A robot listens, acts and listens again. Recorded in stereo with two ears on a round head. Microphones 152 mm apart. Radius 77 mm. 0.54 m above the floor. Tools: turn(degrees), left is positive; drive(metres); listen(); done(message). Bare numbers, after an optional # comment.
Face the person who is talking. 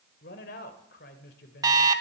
# The man speaking: about 65° left or 115° left.
turn(65)
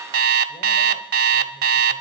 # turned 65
listen()
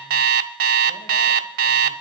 listen()
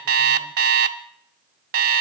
done("I heard a man speaking, but can't make it out now. It was about straight ahead or 50° left.")